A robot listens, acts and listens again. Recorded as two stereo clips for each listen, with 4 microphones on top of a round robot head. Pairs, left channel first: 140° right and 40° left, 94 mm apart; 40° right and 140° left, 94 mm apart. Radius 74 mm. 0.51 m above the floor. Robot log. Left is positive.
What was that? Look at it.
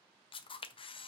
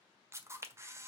note: The camera shutter: 160° right.
cmd yaw -160
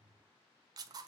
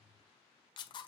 end: Found it: a camera shutter, straight ahead.